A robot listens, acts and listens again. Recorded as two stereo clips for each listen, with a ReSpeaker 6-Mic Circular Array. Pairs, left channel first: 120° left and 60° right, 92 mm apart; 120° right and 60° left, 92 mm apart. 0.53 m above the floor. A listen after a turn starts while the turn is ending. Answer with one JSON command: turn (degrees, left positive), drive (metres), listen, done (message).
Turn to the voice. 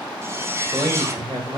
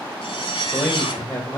{"turn": -55}
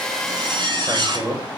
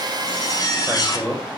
{"turn": -20}
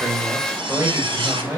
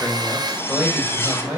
{"done": "Found it: a man speaking, straight ahead, 2 to 4 m away."}